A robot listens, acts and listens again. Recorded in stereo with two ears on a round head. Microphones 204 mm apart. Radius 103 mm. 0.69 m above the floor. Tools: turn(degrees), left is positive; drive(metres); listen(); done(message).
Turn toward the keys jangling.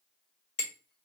listen()
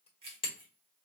turn(degrees=-25)
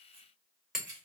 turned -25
turn(degrees=-135)
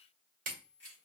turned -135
done("Found it: keys jangling, straight ahead, 2 to 4 m away.")